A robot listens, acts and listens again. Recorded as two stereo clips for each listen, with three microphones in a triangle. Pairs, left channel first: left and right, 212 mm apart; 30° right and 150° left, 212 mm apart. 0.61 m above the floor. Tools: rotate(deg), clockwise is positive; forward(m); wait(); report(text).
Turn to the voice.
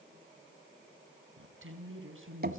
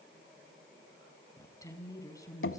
rotate(105)
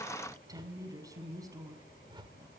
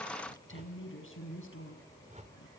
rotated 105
rotate(15)
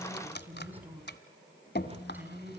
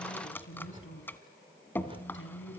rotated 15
rotate(10)
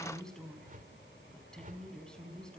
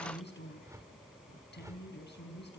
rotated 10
report("Facing the woman speaking.")